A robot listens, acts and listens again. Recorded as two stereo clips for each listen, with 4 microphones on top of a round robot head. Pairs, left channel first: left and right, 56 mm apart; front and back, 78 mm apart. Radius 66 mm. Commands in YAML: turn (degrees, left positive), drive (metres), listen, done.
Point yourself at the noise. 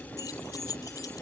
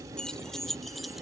turn: 90
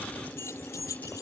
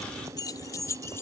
turn: 50
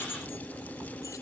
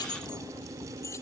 turn: 50
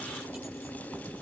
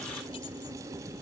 listen: true
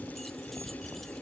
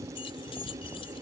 listen: true
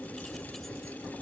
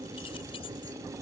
done: "Facing where the keys jangling came from. I can't hear it now."